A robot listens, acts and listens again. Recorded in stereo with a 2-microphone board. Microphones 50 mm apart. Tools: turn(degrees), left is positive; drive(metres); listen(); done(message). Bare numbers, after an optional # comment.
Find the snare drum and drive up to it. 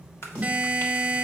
# The snare drum: about 25° left or 155° left.
turn(25)
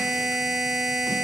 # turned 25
listen()
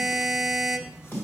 # So it is at 130° left.
turn(130)
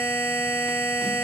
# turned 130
listen()
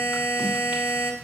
listen()
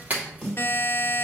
drive(1.0)
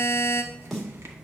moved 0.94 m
drive(1.0)
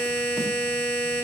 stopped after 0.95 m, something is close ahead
listen()
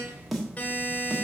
done("I am next to the snare drum.")